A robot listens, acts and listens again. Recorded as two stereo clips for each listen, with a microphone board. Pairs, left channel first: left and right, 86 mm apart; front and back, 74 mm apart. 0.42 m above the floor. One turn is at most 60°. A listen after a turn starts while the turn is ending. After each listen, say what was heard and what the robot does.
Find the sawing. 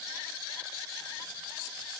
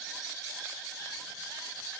Keep listening.
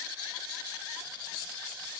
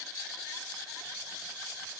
Keep listening.
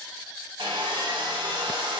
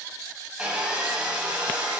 The sawing: 105° right. Turn 60° right.
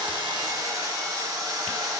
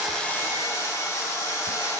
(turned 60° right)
The sawing is now 45° right. Turn 45° right.
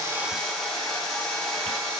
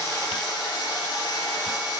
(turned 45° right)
Found it: sawing, straight ahead.